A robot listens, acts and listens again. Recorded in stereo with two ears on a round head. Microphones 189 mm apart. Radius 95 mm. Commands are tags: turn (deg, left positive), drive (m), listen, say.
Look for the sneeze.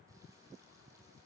<listen/>
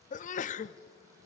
<turn deg="40"/>
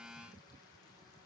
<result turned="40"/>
<listen/>
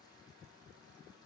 <say>I heard a sneeze, but can't make it out now. It was about straight ahead or 100° left.</say>